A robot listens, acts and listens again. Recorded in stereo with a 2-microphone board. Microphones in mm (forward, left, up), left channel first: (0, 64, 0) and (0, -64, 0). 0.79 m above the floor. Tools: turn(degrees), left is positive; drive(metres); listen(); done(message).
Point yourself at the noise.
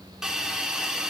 turn(degrees=-30)
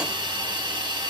turn(degrees=-140)
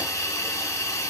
turn(degrees=25)
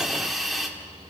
done("Facing the hiss.")